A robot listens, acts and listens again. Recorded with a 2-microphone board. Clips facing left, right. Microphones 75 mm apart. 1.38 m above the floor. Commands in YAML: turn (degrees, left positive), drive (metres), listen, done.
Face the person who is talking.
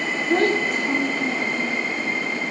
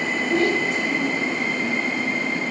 turn: 45
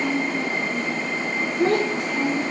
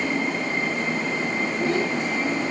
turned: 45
turn: 90
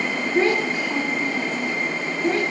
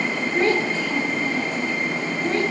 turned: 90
turn: 15
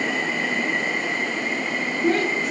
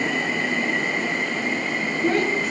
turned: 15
done: "Found it: a child speaking, straight ahead."